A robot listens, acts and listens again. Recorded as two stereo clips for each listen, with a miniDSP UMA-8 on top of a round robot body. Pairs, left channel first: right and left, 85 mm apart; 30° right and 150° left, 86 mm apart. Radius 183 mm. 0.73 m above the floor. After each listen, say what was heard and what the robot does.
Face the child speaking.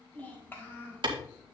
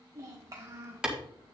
The child speaking: 155° right. Turn 155° right.
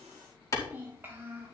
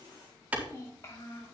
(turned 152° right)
The child speaking is now 30° left. Turn 30° left.
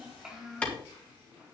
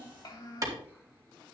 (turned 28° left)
The child speaking is now 10° left. Turn 10° left.
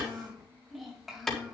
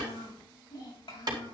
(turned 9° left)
Found it: a child speaking, straight ahead, 2 to 4 m away.